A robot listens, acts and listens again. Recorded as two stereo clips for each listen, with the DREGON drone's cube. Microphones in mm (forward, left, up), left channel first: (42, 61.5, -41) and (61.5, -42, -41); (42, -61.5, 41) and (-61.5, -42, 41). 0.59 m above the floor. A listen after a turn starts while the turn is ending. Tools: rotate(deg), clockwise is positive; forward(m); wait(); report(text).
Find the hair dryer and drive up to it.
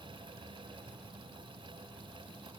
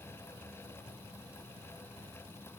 wait()
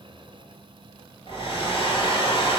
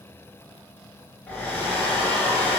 rotate(-65)
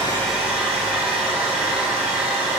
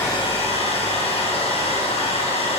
forward(1.0)
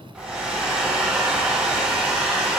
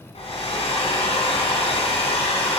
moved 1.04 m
forward(1.0)
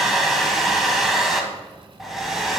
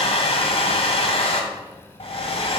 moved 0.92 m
rotate(-10)
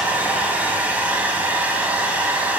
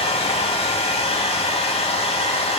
forward(1.0)
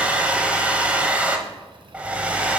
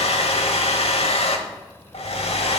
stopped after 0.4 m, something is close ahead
report("I am next to the hair dryer.")